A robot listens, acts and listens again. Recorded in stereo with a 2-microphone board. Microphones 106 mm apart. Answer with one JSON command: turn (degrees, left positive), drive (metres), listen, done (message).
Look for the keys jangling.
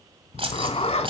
{"turn": -60}
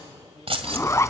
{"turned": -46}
{"turn": -60}
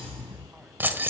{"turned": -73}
{"turn": -20}
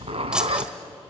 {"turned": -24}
{"listen": true}
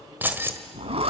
{"turn": -20}
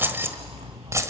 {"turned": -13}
{"turn": -25}
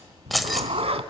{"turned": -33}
{"done": "Facing the keys jangling, 1 to 2 m away."}